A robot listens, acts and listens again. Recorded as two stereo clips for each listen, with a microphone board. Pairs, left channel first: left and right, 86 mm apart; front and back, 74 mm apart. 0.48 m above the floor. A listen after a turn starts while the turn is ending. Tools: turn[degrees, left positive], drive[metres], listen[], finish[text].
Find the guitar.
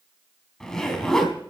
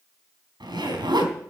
Action: listen[]
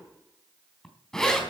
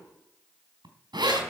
Action: listen[]
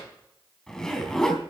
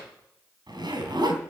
Action: finish[I can't make out a guitar to turn to.]